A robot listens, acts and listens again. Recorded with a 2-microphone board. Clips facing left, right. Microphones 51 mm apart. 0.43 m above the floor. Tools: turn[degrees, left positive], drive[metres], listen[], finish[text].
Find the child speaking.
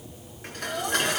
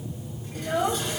Thought: The child speaking: about 25° right or 155° right.
Action: turn[-25]
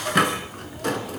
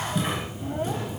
Action: listen[]
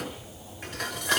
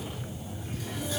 Action: listen[]
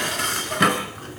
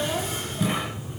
Action: finish[I heard a child speaking, but can't make it out now. It was about straight ahead or 130° right.]